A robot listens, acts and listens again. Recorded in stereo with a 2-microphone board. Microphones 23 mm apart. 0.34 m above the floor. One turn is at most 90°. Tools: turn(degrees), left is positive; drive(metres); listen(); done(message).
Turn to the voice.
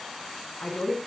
turn(degrees=70)
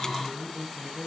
turn(degrees=30)
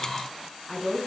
done("Facing the woman speaking, 2 to 4 m away.")